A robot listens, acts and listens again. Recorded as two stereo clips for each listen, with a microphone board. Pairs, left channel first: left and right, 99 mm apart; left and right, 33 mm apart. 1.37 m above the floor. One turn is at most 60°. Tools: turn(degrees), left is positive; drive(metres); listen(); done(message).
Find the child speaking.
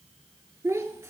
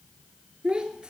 turn(degrees=-25)
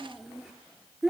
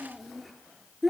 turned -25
done("Facing the child speaking, 1 to 2 m away.")